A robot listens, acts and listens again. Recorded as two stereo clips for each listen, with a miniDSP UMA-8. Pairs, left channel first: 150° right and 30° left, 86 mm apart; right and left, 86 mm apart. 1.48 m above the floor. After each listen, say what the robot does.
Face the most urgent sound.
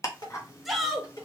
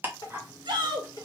Turn 120° left.
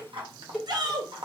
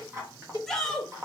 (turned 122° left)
Facing the shout, 1 to 2 m away.